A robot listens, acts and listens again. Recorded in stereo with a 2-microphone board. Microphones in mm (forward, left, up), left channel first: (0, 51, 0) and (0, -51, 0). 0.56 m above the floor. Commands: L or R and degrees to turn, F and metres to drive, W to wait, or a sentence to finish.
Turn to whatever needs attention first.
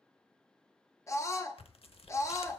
L30
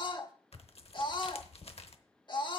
L115
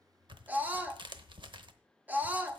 R20
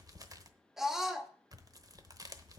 Found it: a scream, straight ahead, 1 to 2 m away.